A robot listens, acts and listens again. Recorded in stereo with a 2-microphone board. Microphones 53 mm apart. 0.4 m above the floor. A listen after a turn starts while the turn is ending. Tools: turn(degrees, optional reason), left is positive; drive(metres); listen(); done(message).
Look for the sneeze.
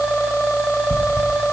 listen()
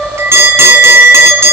listen()
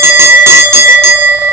done("I can't make out a sneeze to turn to.")